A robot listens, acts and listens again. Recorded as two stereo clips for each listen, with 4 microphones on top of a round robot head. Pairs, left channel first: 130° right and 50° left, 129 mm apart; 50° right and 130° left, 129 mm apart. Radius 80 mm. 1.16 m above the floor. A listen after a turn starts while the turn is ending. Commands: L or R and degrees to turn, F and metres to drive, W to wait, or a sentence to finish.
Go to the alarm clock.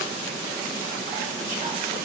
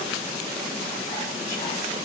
W
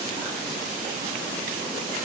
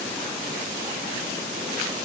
W
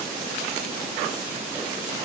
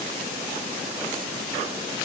I can't make out an alarm clock.